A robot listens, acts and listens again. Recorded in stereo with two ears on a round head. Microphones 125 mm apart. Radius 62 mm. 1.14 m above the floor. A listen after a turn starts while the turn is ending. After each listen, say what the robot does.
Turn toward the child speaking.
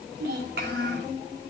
Turn 90° right.
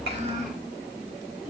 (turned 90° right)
Turn 10° right.
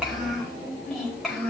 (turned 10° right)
Facing the child speaking.